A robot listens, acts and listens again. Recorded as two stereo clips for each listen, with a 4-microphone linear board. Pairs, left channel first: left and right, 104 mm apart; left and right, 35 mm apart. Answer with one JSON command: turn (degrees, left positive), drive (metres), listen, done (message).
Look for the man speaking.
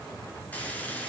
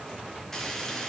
{"listen": true}
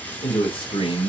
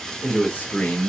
{"turn": 50}
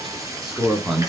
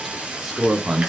{"done": "Facing the man speaking, 2 to 4 m away."}